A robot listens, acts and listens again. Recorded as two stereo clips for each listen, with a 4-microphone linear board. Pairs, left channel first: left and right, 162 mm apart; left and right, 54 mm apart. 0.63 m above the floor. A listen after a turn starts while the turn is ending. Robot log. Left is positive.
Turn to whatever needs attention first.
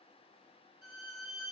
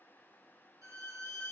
cmd idle
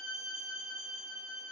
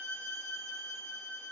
cmd idle
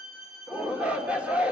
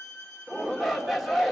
cmd yaw -30
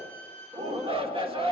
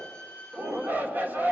note: So it is at 140° right.
cmd yaw -140
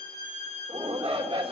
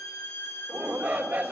note: The shout is now 40° right.
cmd yaw -40
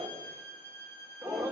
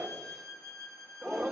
end: Found it: a shout, straight ahead, 1 to 2 m away.